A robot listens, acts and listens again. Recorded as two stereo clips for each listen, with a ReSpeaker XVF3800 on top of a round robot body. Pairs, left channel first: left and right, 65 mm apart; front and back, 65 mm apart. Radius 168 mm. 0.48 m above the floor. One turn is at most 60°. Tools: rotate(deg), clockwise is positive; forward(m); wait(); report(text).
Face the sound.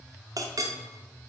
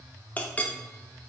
rotate(60)
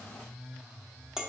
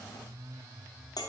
rotate(10)
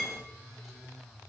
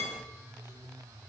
wait()
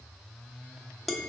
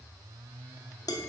report("Found it: a clink, straight ahead, under 1 m away.")